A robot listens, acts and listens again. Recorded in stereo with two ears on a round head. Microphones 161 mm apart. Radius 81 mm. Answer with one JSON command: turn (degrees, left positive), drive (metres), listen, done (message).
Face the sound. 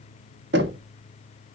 {"turn": -65}
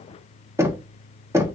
{"turn": -15}
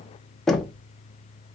{"done": "Found it: knocking, straight ahead."}